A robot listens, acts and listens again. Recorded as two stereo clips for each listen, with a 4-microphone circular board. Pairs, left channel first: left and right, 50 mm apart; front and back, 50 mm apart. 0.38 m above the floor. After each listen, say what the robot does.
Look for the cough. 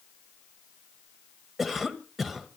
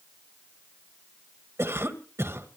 Turn 175° right.
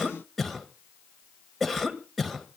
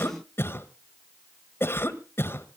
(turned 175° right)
Facing the cough.